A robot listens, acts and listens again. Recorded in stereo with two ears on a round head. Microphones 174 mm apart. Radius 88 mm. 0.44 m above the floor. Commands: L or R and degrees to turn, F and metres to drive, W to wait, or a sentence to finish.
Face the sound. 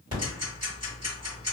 R30
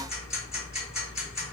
Facing the ticking, 1 to 2 m away.